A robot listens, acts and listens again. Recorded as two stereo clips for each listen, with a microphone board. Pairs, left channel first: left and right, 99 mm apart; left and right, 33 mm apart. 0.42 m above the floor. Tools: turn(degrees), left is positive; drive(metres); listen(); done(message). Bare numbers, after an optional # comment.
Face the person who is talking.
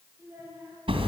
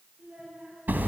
# The child speaking: about 25° right or 155° right.
turn(-25)
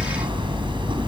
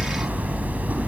listen()
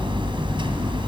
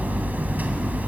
listen()
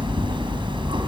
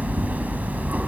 done("I heard a child speaking, but can't make it out now. It was about straight ahead or 130° right.")